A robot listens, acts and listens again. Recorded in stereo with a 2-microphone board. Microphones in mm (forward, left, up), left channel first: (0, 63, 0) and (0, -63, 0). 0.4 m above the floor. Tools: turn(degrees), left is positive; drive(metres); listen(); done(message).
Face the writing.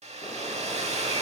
listen()
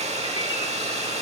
listen()
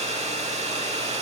done("I can't make out writing to turn to.")